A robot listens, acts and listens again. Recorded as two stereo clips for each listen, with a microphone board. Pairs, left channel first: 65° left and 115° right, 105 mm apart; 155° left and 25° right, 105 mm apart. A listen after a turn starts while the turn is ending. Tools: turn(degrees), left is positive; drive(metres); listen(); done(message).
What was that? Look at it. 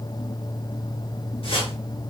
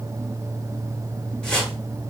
turn(degrees=75)
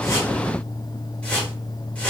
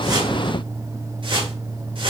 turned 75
turn(degrees=-10)
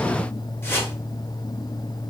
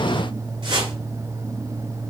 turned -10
done("Found it: a whoosh, straight ahead.")